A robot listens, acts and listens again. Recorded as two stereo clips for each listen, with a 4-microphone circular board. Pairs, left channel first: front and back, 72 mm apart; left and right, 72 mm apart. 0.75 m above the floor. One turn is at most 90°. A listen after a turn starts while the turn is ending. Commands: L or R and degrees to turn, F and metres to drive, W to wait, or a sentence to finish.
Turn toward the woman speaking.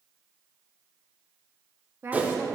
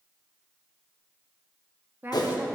R90
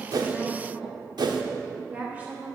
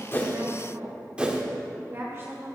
R90
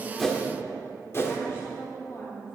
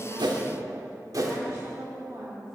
R40
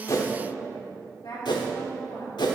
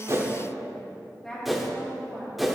L10
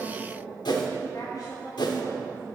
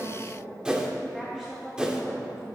Facing the woman speaking.